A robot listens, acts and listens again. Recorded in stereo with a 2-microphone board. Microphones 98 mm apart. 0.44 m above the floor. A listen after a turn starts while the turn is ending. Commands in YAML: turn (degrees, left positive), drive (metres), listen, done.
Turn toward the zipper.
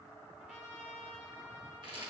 listen: true
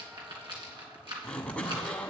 turn: 30
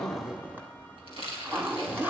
turn: -20
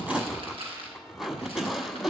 done: "Found it: a zipper, straight ahead."